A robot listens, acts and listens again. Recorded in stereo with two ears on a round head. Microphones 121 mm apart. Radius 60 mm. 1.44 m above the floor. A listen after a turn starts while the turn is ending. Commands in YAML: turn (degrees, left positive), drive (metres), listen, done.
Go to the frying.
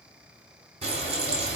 turn: -45
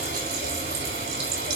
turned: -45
turn: -85
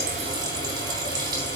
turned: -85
turn: -30
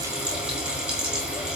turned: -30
drive: 1.0
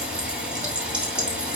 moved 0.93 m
turn: -10
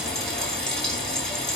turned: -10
drive: 1.0
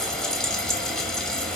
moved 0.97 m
drive: 1.0
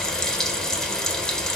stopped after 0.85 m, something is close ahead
done: "Arrived at the frying, straight ahead."